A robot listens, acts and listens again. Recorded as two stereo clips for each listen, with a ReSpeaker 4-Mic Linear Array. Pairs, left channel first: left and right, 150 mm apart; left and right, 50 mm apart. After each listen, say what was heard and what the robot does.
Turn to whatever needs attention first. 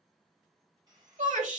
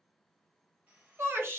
The shout: about 60° right or 120° right. Turn 60° right.
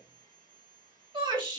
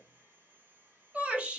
So it is at 40° right. Turn 40° right.
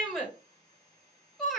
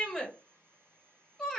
Found it: a shout, straight ahead, 1 to 2 m away.